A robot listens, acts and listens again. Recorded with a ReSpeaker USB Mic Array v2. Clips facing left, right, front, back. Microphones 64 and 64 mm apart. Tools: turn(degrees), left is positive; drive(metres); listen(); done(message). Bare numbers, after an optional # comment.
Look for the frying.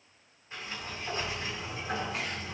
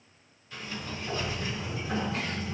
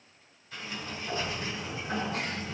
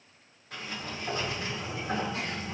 listen()
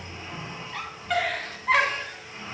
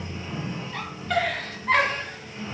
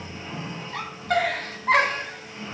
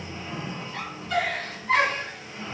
listen()
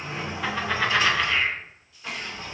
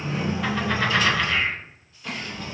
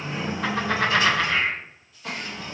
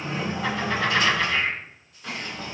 done("I can't make out frying to turn to.")